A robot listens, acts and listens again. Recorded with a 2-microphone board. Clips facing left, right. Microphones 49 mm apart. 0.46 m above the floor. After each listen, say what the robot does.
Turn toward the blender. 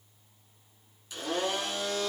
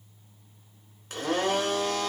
Turn 55° right.
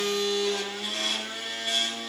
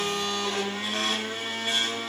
Turn 45° right.
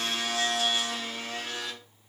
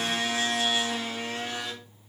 Turn 20° right.
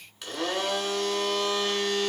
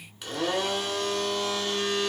Facing the blender.